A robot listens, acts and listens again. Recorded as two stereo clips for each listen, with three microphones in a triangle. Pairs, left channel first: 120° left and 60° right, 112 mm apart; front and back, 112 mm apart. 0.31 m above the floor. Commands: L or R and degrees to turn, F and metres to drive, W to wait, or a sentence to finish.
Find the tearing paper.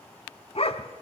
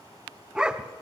W
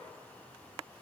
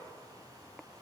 W
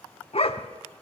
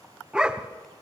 I can't make out tearing paper, only a dog barking.